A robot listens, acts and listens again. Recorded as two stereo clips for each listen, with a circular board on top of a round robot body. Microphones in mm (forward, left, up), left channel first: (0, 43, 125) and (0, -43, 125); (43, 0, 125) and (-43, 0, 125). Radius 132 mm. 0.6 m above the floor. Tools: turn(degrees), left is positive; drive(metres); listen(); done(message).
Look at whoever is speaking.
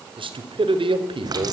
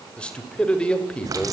turn(degrees=-80)
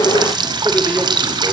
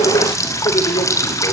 listen()
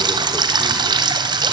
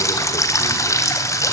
listen()
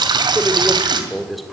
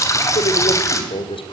done("Found it: a man speaking, straight ahead.")